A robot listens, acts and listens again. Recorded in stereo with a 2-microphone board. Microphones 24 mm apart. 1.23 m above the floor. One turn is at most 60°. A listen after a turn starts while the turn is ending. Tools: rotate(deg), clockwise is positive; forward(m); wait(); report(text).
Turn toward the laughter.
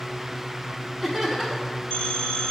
rotate(-30)
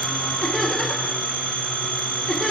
rotate(-60)
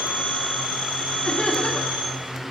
rotate(-60)
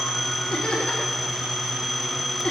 rotate(-45)
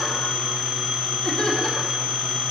rotate(-15)
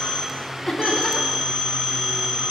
report("Found it: laughter, straight ahead, 2 to 4 m away.")